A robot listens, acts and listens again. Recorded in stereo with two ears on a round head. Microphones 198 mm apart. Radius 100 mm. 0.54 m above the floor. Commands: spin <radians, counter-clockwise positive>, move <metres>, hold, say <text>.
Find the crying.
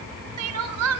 spin -1.57
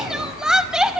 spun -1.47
say Facing the crying, under 1 m away.